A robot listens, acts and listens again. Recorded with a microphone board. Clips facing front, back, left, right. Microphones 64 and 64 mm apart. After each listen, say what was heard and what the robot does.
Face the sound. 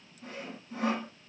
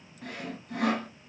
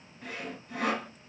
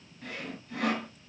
The sawing: 170° left. Turn 170° left.
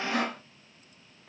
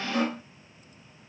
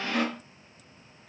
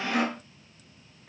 The sawing is now 15° right. Turn 15° right.
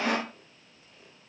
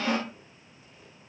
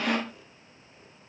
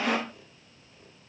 Found it: sawing, straight ahead.